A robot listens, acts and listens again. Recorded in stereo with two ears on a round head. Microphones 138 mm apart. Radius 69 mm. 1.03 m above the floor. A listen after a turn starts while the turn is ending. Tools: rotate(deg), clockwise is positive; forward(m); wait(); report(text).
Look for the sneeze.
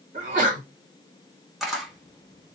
rotate(55)
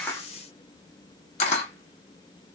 wait()
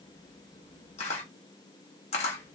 report("I heard a sneeze, but can't make it out now. It was about straight ahead or 70° right.")